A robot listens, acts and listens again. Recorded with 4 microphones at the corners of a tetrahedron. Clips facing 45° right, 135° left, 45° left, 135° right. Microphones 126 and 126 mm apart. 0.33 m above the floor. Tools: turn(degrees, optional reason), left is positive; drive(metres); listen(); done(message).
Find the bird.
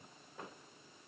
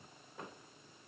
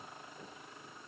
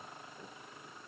listen()
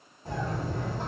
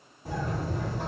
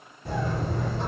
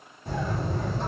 turn(degrees=55, reason="The bird: 55° left.")
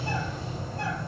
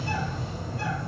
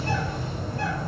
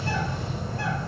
done("Found it: a bird, straight ahead, 1 to 2 m away.")